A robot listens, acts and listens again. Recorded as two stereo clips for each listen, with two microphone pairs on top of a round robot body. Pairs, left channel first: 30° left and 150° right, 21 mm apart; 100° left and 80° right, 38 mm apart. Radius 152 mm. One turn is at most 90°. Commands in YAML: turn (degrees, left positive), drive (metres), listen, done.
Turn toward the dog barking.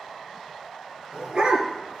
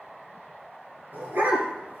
turn: -90
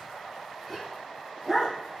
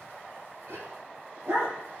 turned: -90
turn: -60
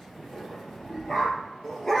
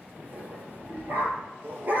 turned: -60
turn: -40
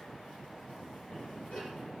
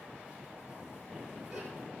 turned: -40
listen: true
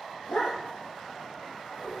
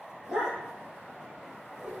done: "Facing the dog barking."